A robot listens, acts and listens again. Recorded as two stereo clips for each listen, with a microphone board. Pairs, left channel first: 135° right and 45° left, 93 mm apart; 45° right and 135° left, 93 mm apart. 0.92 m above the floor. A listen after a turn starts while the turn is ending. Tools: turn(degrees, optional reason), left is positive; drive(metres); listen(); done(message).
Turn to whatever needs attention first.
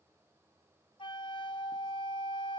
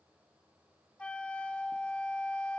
listen()
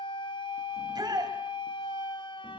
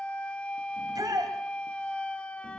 turn(degrees=90, reason="The shout: 90° left.")
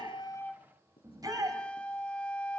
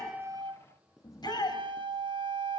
done("Facing the shout, over 4 m away.")